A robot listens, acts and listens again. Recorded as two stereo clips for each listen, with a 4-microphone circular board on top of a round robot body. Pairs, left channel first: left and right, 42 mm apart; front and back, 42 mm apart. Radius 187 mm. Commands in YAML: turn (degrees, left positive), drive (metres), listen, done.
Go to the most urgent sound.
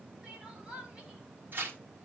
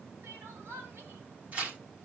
turn: -160
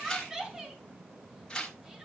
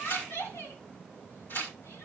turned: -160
turn: -10
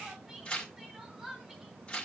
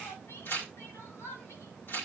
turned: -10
drive: 1.0
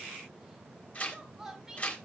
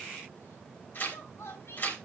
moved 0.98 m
turn: -10
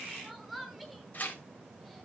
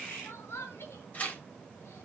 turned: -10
drive: 1.0
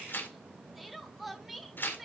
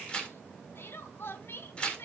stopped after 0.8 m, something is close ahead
done: "I am next to the crying."